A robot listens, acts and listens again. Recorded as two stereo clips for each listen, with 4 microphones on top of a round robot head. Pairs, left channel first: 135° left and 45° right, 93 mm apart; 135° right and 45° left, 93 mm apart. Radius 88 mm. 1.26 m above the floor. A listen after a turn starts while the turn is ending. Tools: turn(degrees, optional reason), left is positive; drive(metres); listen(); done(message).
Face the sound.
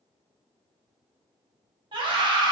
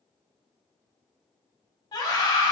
turn(degrees=-85, reason="The scream: 85° right.")
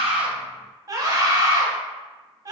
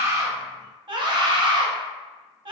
turn(degrees=10, reason="The scream is now 10° left.")
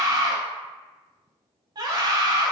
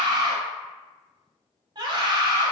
done("Found it: a scream, straight ahead, under 1 m away.")